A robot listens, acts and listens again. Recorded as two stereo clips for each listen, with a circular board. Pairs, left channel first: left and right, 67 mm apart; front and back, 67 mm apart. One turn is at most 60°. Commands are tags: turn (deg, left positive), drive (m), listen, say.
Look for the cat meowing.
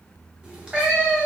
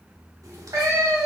<turn deg="-60"/>
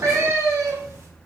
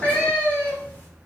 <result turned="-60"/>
<turn deg="-55"/>
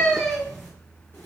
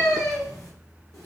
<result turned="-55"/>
<turn deg="20"/>
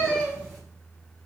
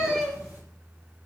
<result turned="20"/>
<turn deg="20"/>
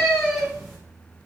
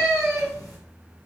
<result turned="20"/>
<say>Facing the cat meowing.</say>